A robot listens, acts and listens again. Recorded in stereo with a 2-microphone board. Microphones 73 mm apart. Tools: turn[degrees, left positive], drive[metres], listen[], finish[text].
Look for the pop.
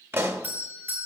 Thought: The pop: about 35° right or 145° right.
Action: turn[-35]
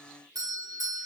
Action: listen[]
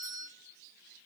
Action: finish[I heard a pop, but can't make it out now. It was about straight ahead or 110° right.]